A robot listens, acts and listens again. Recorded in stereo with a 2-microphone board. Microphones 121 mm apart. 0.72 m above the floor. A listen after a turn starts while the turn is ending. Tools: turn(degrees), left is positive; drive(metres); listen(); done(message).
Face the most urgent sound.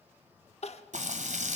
turn(degrees=65)
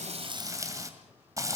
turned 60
listen()
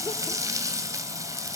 listen()
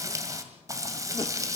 done("I heard crying, but can't make it out now. It was about 5° left or 55° left.")